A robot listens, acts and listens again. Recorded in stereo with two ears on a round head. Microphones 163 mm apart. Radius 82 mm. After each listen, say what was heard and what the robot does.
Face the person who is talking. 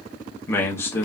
Turn 30° left.
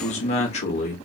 So it is at 135° left. Turn 135° left.
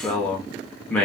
The man speaking is now 10° left. Turn 10° left.
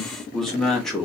Found it: a man speaking, straight ahead, under 1 m away.